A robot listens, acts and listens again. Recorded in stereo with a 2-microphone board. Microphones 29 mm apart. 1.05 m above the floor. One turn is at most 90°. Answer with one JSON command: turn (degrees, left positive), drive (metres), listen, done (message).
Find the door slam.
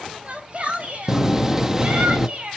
{"turn": -30}
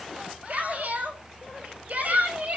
{"listen": true}
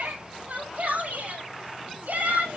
{"done": "I heard a door slam, but can't make it out now. It was about 15° left or 135° right."}